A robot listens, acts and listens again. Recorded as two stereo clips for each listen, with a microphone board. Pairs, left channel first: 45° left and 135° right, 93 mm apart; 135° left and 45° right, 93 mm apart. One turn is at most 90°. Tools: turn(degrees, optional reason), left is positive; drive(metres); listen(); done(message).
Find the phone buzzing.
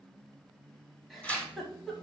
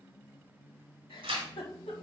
listen()
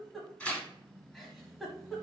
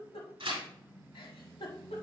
listen()
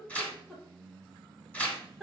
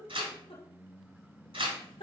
done("I can't make out a phone buzzing to turn to.")